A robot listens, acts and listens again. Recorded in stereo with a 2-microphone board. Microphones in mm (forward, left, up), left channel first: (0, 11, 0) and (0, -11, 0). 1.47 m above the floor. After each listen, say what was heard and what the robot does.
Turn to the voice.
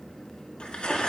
Keep listening.
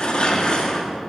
Keep listening.
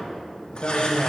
The man speaking: about 70° left or 110° left. Turn 70° left.
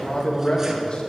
So it is at 40° left. Turn 40° left.
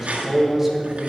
The man speaking is now 10° right. Turn 10° right.
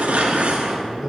Found it: a man speaking, straight ahead.